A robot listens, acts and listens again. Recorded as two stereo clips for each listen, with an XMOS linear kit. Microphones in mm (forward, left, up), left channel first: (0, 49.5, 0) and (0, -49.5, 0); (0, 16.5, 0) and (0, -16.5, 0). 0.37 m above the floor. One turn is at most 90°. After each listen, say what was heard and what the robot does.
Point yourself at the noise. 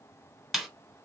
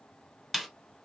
Turn 30° left.
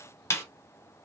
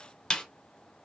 So it is at 150° left. Turn 90° left.
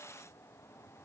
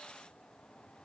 The snare drum is now 70° left. Turn 70° left.
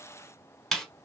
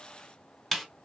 Found it: a snare drum, straight ahead.